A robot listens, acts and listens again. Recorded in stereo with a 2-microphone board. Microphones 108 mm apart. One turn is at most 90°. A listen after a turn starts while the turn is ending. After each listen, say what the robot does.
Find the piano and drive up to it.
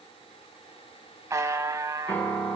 Turn 15° left.
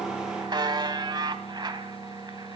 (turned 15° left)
Drive 1.0 m forward.
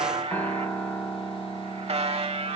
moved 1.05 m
Turn 10° left.
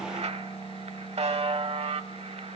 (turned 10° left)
Drive 1.0 m forward.
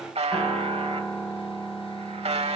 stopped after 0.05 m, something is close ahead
Blocked. The piano is further on, straight ahead.